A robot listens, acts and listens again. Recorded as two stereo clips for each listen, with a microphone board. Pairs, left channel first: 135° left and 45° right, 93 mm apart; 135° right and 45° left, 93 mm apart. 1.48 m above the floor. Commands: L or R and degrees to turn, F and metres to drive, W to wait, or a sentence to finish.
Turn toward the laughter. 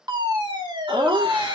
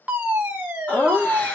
R60
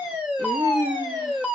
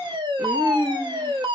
R10
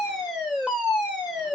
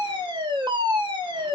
W
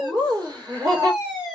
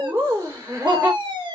Found it: laughter, straight ahead.